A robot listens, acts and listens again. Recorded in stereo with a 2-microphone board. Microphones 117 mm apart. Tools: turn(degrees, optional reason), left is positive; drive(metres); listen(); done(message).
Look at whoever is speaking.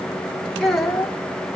turn(degrees=30)
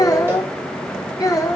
turn(degrees=150, reason="So it is at 150° left.")
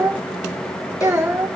turn(degrees=-20, reason="The child speaking is now 20° right.")
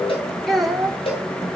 done("Facing the child speaking.")